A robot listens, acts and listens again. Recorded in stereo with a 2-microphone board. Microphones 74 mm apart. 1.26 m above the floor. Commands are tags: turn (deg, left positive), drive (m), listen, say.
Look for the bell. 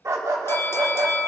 <turn deg="30"/>
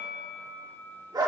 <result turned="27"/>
<turn deg="115"/>
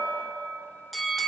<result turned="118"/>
<say>Found it: a bell, straight ahead, under 1 m away.</say>